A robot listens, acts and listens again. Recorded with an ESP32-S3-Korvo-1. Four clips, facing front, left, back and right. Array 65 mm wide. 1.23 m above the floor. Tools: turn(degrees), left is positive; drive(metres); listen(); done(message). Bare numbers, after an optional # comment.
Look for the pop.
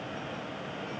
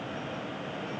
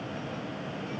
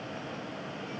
listen()
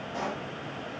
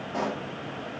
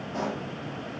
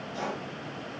# The pop: 85° left.
turn(85)
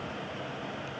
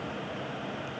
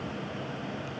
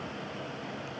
done("Facing where the pop came from. I can't hear it now.")